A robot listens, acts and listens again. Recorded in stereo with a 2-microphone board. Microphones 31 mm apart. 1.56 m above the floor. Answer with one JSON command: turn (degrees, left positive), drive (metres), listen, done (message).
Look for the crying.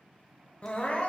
{"turn": 45}
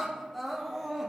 {"done": "Found it: crying, straight ahead, under 1 m away."}